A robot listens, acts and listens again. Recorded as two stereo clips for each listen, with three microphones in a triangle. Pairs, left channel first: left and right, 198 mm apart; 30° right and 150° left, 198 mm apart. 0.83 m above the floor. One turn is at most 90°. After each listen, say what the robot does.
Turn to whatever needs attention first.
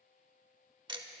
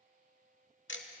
Keep listening.
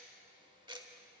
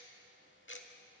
Keep listening.
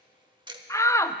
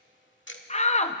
Turn 15° left.
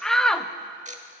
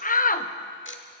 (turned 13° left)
Facing the shout, under 1 m away.